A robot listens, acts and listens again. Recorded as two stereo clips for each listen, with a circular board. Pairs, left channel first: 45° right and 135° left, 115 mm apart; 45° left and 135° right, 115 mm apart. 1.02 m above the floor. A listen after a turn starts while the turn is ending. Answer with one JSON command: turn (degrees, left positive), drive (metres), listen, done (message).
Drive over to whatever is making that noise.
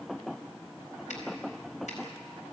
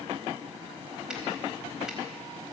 {"listen": true}
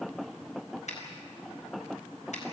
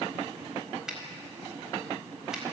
{"turn": -50}
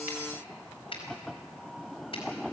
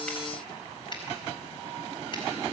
{"drive": 1.0}
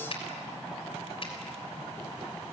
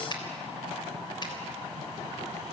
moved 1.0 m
{"drive": 1.0}
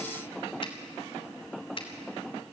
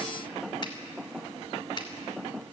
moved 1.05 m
{"drive": 1.0}
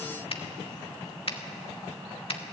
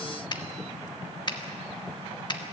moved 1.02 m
{"drive": 1.0}
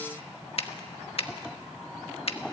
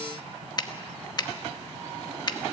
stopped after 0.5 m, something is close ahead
{"turn": -10}
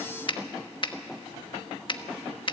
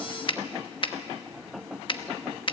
{"done": "Arrived at the finger snap, straight ahead."}